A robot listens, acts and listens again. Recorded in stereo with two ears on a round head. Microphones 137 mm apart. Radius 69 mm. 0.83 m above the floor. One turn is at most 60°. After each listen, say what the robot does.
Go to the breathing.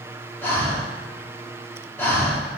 Turn 15° left.
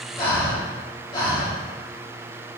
Turn 60° left.
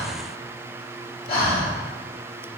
Turn 60° left.
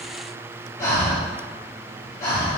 Turn 25° left.
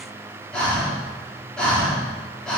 Drive 1.0 m forward.
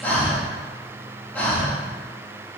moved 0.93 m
Turn 15° left.
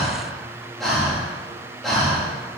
Drive 1.0 m forward.
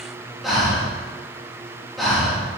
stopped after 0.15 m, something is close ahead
I am next to the breathing.